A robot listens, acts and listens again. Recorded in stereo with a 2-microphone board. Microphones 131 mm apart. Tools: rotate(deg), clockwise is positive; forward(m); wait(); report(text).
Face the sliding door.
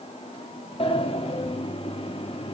rotate(-45)
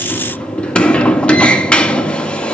rotate(-10)
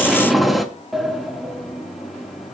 report("Facing the sliding door.")